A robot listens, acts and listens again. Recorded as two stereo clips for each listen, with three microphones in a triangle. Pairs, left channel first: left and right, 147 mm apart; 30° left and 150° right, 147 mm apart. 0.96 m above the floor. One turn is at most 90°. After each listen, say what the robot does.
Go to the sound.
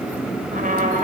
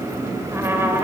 Turn 75° right.
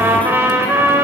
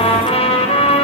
Turn 15° right.
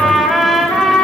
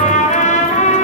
Drive 1.0 m forward.
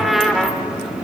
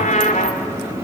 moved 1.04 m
Drive 1.0 m forward.
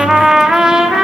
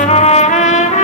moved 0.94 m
Drive 1.0 m forward.
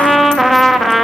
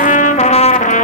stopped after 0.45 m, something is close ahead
Arrived at the trumpet, straight ahead.